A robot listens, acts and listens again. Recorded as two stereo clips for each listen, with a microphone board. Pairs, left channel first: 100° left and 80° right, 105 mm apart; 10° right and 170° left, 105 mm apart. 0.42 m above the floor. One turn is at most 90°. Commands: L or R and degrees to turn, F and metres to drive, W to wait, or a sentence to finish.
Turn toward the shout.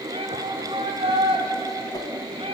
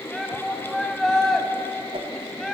R90
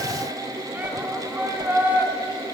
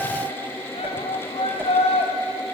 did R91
Facing the shout.